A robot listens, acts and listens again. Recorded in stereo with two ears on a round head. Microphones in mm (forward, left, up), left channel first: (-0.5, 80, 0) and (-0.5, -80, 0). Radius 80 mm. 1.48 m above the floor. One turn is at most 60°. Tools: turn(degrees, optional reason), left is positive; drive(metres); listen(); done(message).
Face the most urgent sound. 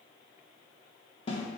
listen()
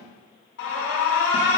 turn(degrees=60, reason="The alarm: about 70° left or 110° left.")
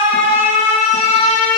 turn(degrees=40, reason="So it is at 40° left.")
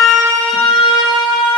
done("Found it: an alarm, straight ahead.")